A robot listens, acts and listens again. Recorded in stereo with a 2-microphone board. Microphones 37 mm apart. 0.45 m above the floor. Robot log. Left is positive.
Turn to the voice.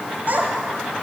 note: The child speaking: about 50° right or 130° right.
cmd yaw -50
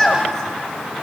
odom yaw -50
note: So it is at 15° left.
cmd yaw +15
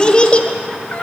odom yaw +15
note: The child speaking is now 40° left.
cmd yaw +40
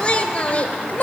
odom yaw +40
note: The child speaking is now 40° left.
cmd yaw +40
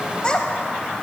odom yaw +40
note: The child speaking is now 25° left.
cmd yaw +25
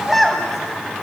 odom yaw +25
end: Facing the child speaking, 2 to 4 m away.